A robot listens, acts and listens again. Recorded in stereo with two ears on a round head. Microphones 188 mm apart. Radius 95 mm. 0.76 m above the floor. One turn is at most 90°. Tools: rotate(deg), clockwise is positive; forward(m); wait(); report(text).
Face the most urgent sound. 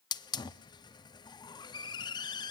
wait()
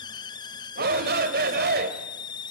rotate(45)
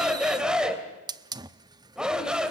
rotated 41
report("Facing the shout.")